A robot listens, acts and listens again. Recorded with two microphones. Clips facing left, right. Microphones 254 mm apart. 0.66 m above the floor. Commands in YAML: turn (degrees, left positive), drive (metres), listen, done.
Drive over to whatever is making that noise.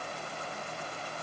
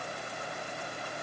listen: true
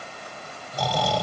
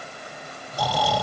turn: -30
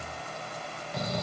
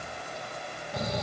turn: -145
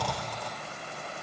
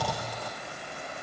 drive: 1.0
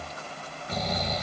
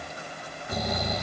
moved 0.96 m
turn: -10
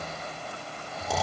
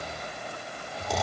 drive: 1.0
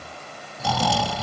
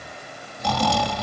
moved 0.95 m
drive: 1.0
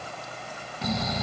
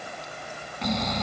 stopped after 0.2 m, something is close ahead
done: "I am next to the snoring."